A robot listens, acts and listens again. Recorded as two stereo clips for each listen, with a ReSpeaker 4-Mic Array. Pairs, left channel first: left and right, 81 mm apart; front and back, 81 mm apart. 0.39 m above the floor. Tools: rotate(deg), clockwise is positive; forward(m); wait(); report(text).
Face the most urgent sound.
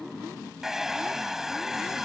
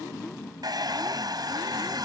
wait()
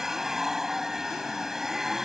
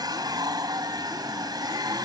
wait()
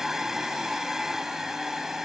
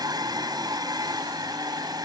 report("I can't make out anything urgent, only a hair dryer.")